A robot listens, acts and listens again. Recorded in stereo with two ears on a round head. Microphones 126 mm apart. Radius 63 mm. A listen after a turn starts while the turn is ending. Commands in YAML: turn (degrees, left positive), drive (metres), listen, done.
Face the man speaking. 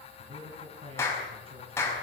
turn: -40
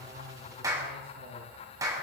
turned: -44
turn: -100
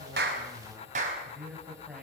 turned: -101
turn: -10
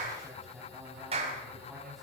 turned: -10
done: "Found it: a man speaking, straight ahead, over 4 m away."